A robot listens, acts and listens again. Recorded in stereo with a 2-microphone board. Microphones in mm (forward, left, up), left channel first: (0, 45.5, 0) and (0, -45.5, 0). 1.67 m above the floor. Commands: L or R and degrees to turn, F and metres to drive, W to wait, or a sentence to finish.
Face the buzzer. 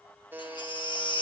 R20
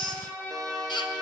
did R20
W
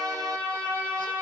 W
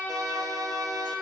I heard a buzzer, but can't make it out now. It was about straight ahead or 140° right.